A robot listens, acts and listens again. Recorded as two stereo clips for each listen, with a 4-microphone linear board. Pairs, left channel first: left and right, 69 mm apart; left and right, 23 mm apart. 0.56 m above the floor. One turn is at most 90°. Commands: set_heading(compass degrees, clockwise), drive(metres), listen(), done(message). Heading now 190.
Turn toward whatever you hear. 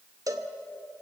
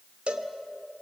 set_heading(245)
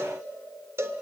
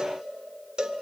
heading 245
set_heading(295)
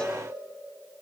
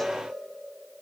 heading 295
set_heading(275)
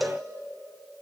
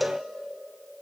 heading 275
done("Found it: a cowbell, straight ahead, 1 to 2 m away.")